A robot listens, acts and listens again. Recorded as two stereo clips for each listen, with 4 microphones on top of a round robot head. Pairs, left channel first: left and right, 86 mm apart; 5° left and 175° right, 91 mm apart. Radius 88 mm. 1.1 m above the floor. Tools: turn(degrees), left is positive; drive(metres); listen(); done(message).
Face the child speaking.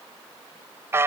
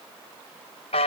listen()
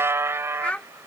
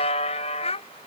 turn(degrees=10)
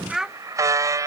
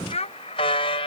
done("Facing the child speaking.")